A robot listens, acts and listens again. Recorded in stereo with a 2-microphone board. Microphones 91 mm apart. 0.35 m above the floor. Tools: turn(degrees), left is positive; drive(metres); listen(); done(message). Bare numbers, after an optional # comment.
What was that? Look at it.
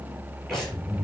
turn(30)
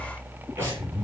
# So it is at 30° right.
turn(-30)
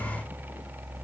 listen()
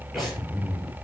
done("Facing the breathing.")